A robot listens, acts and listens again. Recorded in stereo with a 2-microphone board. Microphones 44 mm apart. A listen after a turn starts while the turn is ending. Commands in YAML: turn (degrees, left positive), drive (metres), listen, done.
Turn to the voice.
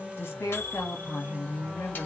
turn: 60
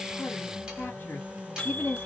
turn: 55
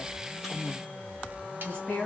turn: 25
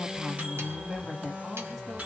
done: "Facing the woman speaking, 1 to 2 m away."